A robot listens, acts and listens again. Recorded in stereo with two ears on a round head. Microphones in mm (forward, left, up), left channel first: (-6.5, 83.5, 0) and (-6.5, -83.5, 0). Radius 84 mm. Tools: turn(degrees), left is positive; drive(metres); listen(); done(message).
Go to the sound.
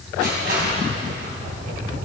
turn(degrees=-55)
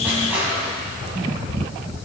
turn(degrees=-10)
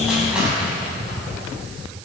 drive(metres=1.0)
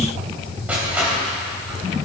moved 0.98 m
turn(degrees=-10)
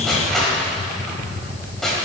drive(metres=1.0)
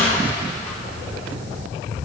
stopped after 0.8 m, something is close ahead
turn(degrees=10)
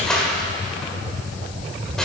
done("Arrived at the crushing, straight ahead.")